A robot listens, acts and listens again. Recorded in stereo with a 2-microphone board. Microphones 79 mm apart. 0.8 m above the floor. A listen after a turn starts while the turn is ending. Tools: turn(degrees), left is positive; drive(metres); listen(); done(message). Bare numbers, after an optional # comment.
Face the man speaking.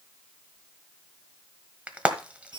listen()
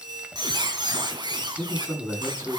turn(-30)
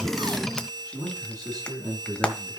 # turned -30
# So it is at 135° right.
turn(-135)
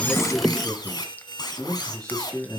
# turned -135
# The man speaking is now 10° left.
turn(10)
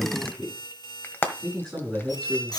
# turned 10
done("Facing the man speaking, over 4 m away.")